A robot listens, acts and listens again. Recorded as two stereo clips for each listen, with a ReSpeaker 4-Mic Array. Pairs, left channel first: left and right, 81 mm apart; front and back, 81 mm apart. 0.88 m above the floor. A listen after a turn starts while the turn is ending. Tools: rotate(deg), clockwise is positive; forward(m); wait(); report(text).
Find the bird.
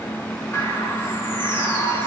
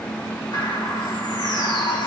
rotate(-35)
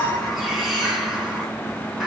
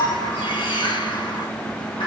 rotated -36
report("Found it: a bird, straight ahead, over 4 m away.")